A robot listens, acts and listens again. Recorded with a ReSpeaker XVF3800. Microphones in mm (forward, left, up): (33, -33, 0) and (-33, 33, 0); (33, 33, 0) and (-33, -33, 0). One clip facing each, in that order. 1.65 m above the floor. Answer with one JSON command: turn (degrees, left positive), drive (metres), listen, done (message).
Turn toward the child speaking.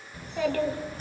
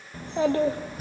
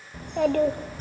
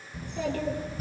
{"turn": 70}
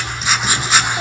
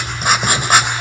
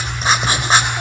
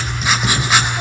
{"listen": true}
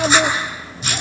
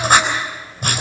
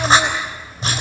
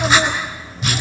{"turn": -40}
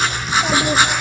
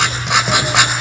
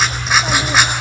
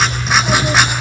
{"listen": true}
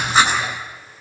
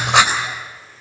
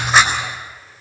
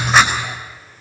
{"listen": true}
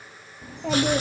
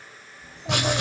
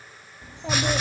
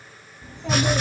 {"turn": -25}
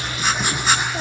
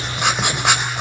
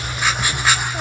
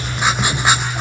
{"listen": true}
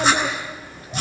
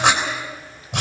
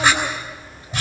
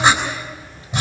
{"done": "Facing the child speaking, 2 to 4 m away."}